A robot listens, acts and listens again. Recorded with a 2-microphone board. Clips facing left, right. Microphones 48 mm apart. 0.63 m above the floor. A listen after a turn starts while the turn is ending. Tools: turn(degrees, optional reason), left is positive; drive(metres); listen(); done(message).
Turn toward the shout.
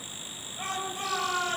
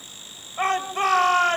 turn(degrees=-55, reason="The shout: about 55° right or 125° right.")
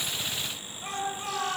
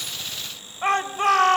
turn(degrees=-65, reason="So it is at 65° right.")
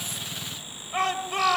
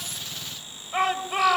turn(degrees=-10, reason="The shout is now 10° right.")
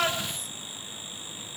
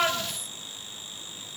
done("Found it: a shout, straight ahead, 2 to 4 m away.")